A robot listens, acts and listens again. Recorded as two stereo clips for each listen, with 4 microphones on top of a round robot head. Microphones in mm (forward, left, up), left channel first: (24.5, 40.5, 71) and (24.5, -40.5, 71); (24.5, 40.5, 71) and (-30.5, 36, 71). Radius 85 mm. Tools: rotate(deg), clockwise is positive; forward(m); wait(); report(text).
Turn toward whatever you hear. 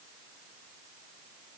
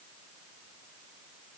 wait()
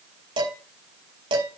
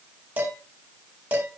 rotate(115)
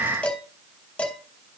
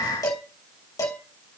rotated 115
rotate(-15)
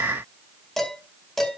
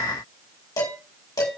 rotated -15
report("Facing the dishes clattering.")